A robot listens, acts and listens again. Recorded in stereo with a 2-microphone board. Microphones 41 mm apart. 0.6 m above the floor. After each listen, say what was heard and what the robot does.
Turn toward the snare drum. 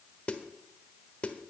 The snare drum: about 30° left or 150° left. Turn 30° left.
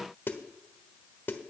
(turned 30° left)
So it is at 120° left. Turn 120° left.
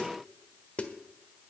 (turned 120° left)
The snare drum is now 35° left. Turn 35° left.
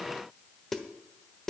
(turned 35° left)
The snare drum is now 10° left. Turn 10° left.
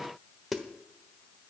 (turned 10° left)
Facing the snare drum.